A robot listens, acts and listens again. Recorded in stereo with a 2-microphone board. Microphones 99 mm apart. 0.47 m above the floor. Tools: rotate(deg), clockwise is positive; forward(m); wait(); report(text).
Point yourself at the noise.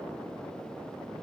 wait()
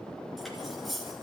rotate(-30)
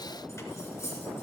rotate(-150)
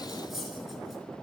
report("Facing the cutlery clinking.")